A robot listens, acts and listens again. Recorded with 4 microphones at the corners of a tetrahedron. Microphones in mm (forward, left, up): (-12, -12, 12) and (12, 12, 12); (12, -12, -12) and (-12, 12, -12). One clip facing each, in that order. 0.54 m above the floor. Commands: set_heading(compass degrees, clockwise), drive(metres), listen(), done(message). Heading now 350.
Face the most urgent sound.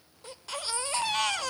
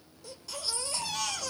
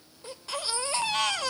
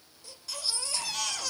set_heading(80)
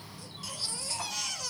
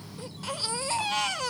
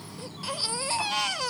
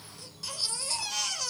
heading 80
done("Found it: a baby crying, straight ahead.")